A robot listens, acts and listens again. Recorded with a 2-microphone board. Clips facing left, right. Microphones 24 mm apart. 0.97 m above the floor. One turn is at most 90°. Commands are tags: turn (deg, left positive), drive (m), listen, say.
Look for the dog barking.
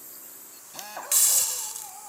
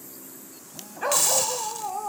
<turn deg="-40"/>
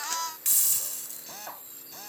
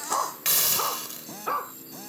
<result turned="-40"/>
<turn deg="-90"/>
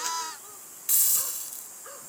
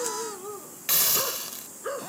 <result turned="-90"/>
<turn deg="-30"/>
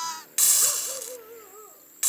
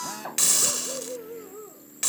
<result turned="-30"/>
<turn deg="10"/>
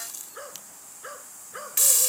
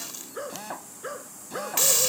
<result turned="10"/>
<say>Found it: a dog barking, straight ahead.</say>